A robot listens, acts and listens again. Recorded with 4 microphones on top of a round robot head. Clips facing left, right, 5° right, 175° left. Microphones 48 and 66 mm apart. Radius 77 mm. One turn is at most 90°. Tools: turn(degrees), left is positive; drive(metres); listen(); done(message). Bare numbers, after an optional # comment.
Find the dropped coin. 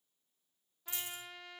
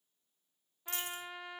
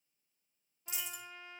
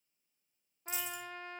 # The dropped coin: 40° right.
turn(-40)
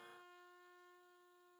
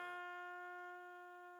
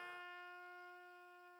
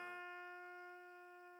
done("Facing where the dropped coin came from. I can't hear it now.")